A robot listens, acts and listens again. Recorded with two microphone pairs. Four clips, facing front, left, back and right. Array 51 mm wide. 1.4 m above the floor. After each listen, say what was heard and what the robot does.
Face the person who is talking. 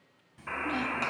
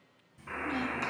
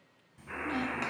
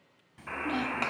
The child speaking: 80° right. Turn 80° right.
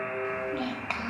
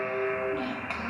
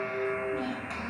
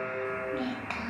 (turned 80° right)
Found it: a child speaking, straight ahead.